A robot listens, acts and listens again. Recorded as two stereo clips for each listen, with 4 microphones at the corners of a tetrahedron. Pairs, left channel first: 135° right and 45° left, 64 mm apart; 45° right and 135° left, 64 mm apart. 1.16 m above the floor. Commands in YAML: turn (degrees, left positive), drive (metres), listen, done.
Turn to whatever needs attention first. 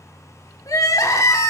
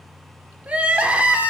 turn: -155
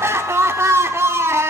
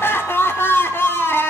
done: "Facing the crying, 1 to 2 m away."